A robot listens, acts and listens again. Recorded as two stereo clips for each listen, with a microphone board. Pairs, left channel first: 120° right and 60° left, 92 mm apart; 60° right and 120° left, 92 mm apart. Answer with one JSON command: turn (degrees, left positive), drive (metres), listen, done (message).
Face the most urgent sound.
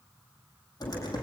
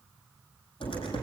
{"listen": true}
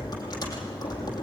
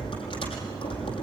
{"listen": true}
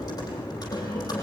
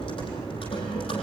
{"done": "I can't make out anything urgent to turn to."}